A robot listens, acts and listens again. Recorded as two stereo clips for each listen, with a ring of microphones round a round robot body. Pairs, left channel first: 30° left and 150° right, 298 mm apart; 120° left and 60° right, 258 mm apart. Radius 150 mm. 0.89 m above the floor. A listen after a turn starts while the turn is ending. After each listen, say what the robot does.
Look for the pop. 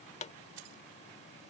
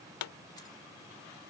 Turn 100° left.
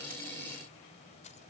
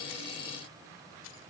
I heard a pop from this way, but can't make it out now.